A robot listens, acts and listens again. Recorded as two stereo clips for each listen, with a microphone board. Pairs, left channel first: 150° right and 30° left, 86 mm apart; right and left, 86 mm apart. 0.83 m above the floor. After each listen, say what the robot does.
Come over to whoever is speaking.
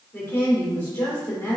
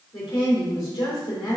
Turn 90° right.
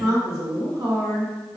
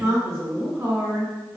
Turn 30° left.
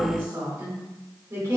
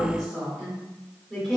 Drive 1.0 m forward.
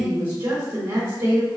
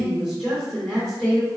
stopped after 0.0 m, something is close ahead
Blocked. The woman speaking is further on, straight ahead.